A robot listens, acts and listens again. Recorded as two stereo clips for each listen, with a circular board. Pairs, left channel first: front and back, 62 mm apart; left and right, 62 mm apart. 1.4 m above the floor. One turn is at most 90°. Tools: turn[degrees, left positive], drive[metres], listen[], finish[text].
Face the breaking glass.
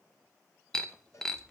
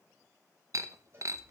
Thought: The breaking glass: 80° right.
Action: turn[-80]
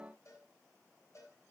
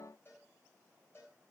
Action: finish[Facing where the breaking glass came from. I can't hear it now.]